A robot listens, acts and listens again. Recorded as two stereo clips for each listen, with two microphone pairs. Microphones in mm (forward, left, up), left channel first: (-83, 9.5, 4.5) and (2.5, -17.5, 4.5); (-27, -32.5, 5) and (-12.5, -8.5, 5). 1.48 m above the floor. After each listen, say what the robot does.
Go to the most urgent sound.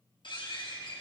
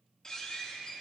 Keep listening.
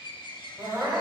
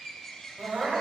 Turn 30° left.
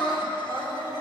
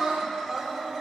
Drive 1.0 m forward.
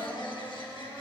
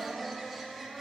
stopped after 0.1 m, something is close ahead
Blocked. The crying is further on, straight ahead.